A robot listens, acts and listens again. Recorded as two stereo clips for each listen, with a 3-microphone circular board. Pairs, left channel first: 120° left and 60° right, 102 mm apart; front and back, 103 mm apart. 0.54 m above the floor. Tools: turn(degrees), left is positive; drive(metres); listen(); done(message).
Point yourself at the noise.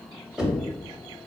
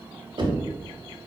turn(degrees=-145)
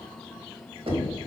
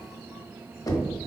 turn(degrees=-55)
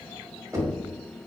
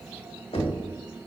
done("Found it: knocking, straight ahead, under 1 m away.")